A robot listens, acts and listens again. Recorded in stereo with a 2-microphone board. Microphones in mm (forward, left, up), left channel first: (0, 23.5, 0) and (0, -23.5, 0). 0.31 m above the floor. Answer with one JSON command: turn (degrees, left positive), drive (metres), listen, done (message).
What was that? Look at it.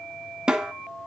{"turn": -15}
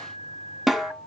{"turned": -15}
{"done": "Facing the snare drum, 1 to 2 m away."}